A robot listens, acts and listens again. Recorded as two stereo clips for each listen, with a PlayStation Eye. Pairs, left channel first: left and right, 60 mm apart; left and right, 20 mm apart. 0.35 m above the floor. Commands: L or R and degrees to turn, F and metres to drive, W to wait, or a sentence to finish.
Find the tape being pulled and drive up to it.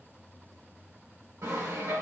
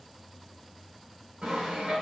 W
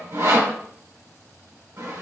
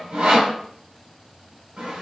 W
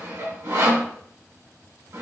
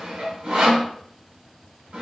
I can't make out tape being pulled, only sawing.